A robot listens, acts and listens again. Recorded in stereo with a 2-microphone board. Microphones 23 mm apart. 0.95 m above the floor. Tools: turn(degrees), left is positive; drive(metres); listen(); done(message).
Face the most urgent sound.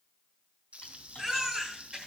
turn(degrees=-30)
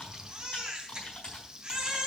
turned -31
turn(degrees=-140)
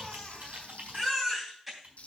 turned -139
done("Found it: a baby crying, straight ahead.")